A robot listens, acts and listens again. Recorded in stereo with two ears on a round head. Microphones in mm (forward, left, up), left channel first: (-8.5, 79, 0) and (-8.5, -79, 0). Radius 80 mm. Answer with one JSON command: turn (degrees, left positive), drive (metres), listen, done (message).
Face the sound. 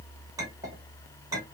{"turn": -20}
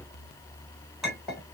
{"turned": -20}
{"done": "Facing the clink, 2 to 4 m away."}